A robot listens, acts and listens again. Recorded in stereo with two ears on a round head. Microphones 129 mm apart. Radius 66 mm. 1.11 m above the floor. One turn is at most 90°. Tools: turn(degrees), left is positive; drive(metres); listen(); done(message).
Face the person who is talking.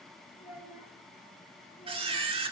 turn(degrees=-15)
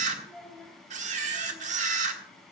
done("Facing the child speaking, 2 to 4 m away.")